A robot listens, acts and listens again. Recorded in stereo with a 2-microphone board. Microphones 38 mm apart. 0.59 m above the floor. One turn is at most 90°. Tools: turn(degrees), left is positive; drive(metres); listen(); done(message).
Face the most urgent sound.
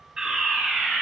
turn(degrees=-15)
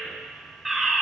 done("Found it: a fire alarm, straight ahead.")